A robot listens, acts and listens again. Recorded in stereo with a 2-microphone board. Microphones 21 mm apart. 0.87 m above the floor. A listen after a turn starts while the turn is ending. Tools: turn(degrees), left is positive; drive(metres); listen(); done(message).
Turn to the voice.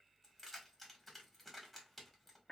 listen()
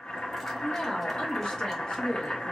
turn(degrees=55)
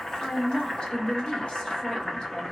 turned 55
turn(degrees=50)
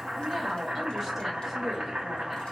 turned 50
turn(degrees=-20)
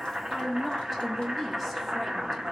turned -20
done("Facing the woman speaking, 1 to 2 m away.")